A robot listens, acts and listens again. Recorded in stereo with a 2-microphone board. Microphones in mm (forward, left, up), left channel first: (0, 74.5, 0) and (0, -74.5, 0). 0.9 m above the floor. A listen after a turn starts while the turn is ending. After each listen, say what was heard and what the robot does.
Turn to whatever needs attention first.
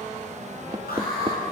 The alarm: about 75° left or 105° left. Turn 75° left.
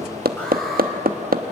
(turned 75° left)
Keep listening.
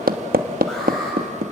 Keep listening.
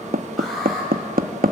Facing the alarm, over 4 m away.